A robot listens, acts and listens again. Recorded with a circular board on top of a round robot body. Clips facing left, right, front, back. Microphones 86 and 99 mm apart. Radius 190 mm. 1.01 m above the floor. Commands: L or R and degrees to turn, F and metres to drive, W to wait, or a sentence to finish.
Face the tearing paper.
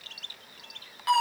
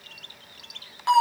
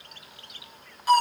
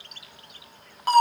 W
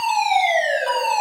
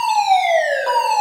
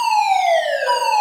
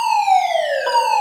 W
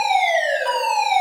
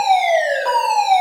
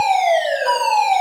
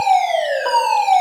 I can't make out tearing paper to turn to.